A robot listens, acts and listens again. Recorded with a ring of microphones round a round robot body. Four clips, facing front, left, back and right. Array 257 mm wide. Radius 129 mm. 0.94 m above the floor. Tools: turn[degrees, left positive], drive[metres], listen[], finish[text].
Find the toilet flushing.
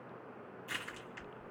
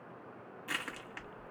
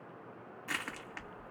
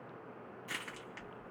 Action: listen[]
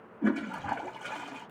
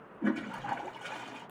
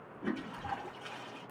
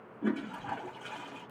Thought: The toilet flushing: 25° left.
Action: turn[25]
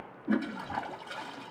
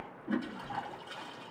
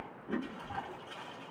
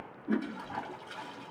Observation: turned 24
Action: finish[Found it: a toilet flushing, straight ahead, 1 to 2 m away.]